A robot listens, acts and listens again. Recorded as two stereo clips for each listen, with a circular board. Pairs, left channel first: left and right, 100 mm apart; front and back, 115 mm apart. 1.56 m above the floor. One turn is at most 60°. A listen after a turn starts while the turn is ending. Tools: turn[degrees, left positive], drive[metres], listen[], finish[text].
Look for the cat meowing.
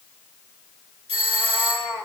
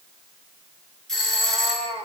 Thought: The cat meowing: 140° right.
Action: turn[-60]
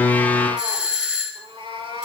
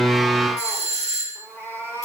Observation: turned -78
Thought: The cat meowing is now 70° right.
Action: turn[-60]
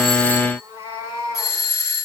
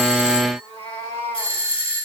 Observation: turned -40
Thought: The cat meowing is now 30° right.
Action: turn[-30]
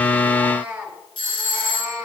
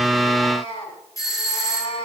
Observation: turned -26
Thought: The cat meowing is now 15° right.
Action: turn[-15]
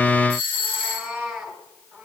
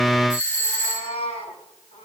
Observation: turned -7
Action: finish[Facing the cat meowing.]